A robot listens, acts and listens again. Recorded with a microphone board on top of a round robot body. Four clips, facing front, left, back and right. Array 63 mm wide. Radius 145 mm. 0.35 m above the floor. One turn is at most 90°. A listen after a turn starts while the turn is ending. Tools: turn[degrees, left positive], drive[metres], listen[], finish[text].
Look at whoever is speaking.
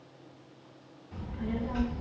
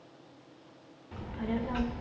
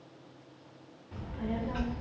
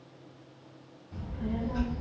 Thought: The child speaking: 95° left.
Action: turn[90]
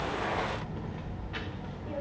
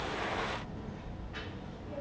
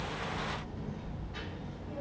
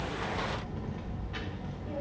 Thought: The child speaking is now 20° right.
Action: turn[-20]
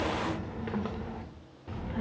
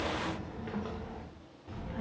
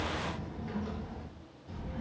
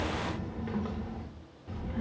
Action: finish[Facing the child speaking.]